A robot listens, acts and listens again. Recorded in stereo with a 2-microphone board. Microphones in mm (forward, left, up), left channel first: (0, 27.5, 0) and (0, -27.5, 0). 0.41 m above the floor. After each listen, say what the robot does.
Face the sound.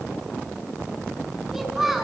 Turn 30° right.
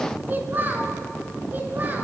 Turn 145° right.
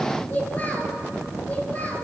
Turn 30° left.
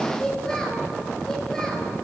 Keep listening.
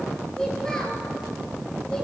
Keep listening.
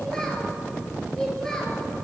I heard a child speaking from this way, but can't make it out now.